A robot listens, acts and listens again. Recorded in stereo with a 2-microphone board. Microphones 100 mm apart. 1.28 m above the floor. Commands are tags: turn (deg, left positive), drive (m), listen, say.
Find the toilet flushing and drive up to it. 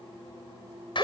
<listen/>
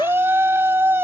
<listen/>
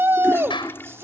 <turn deg="25"/>
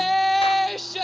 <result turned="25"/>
<listen/>
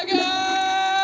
<drive m="1.0"/>
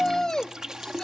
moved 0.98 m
<drive m="1.0"/>
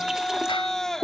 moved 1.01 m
<drive m="1.0"/>
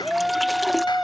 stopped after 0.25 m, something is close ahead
<listen/>
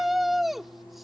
<listen/>
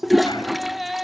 <say>I am next to the toilet flushing.</say>